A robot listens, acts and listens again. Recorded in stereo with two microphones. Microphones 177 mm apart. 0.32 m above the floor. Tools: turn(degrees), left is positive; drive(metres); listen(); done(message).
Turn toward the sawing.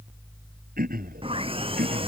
turn(degrees=-30)
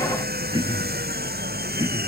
turn(degrees=-115)
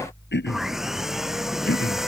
done("Facing the sawing.")